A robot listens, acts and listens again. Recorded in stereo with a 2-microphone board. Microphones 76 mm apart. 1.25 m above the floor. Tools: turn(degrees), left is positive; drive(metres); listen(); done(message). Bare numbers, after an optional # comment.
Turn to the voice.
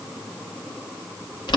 listen()
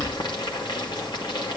listen()
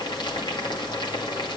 done("I can't make out anyone speaking, only boiling.")